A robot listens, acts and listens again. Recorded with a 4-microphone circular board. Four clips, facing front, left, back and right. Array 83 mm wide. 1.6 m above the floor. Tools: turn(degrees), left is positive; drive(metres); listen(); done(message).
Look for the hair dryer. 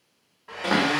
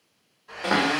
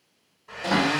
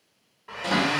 turn(degrees=-45)
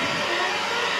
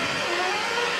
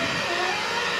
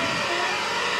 turn(degrees=-25)
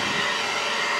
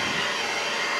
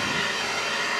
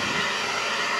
done("Facing the hair dryer, 1 to 2 m away.")